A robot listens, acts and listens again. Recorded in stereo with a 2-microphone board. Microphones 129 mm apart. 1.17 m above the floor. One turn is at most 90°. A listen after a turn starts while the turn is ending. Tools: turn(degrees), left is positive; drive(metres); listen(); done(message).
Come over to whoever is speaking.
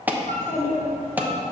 turn(degrees=20)
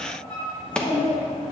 turn(degrees=90)
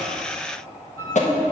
turn(degrees=35)
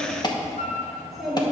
drive(metres=1.0)
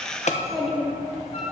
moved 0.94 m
drive(metres=1.0)
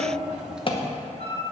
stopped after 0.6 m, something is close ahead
done("Arrived at the child speaking, straight ahead.")